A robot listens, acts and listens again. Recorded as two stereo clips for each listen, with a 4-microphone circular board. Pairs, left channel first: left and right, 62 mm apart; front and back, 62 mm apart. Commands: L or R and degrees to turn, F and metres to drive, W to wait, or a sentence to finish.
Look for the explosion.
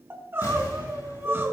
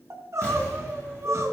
L65
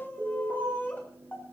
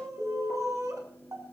I heard an explosion from this way, but can't make it out now.